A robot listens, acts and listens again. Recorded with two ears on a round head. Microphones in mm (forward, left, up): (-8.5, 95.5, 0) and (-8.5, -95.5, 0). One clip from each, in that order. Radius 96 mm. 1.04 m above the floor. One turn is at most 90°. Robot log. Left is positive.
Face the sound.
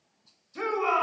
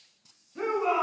cmd yaw +90
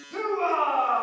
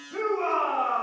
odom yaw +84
note: So it is at 15° left.
cmd yaw +15
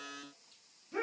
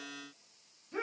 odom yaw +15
end: Facing the shout, over 4 m away.